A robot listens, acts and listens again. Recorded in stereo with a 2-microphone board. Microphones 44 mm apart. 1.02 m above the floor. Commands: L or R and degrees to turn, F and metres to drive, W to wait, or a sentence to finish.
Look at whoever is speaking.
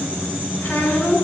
L55
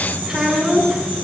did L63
R10
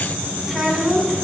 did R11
Facing the child speaking, over 4 m away.